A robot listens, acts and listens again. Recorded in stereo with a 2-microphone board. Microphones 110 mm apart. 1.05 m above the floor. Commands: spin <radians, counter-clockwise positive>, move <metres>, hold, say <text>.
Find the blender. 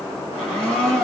spin 0.52
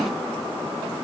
hold
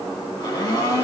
spin 2.53
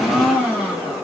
spin -0.17
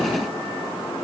hold
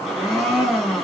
say Facing the blender, 2 to 4 m away.